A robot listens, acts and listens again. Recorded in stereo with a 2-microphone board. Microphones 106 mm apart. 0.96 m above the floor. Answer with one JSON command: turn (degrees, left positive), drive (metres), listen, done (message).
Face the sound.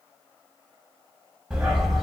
{"turn": 30}
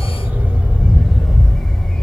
{"turn": 30}
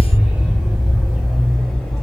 {"turn": 30}
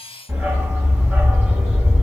{"turn": -30}
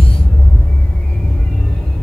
{"turn": 15}
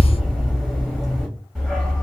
{"done": "Facing the dog barking, 1 to 2 m away."}